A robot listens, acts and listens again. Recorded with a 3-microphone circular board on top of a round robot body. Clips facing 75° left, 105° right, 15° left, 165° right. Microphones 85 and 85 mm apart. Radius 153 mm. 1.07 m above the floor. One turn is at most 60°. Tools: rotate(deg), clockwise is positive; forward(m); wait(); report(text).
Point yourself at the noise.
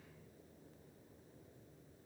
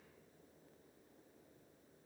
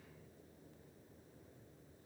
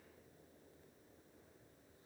wait()
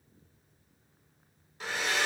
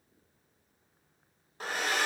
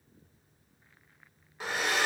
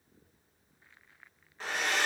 rotate(60)
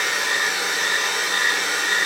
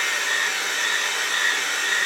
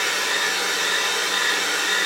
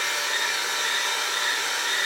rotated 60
report("Facing the hair dryer.")